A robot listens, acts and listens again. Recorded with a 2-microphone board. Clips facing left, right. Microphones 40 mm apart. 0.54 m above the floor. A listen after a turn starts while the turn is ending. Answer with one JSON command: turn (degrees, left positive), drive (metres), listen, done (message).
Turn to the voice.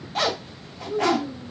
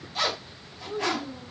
{"turn": -30}
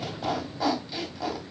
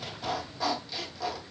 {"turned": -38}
{"listen": true}
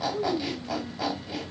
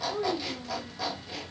{"turn": -140}
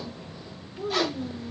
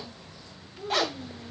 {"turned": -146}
{"turn": 10}
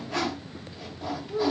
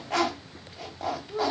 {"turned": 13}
{"done": "Found it: a child speaking, straight ahead, under 1 m away."}